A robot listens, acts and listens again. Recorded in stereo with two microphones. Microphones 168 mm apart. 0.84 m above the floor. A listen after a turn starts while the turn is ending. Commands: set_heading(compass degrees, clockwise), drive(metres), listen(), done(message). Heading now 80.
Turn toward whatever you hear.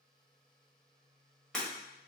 set_heading(50)
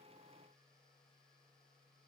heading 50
listen()
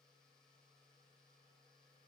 done("I heard breaking glass, but can't make it out now. It was about 25° right or 145° left.")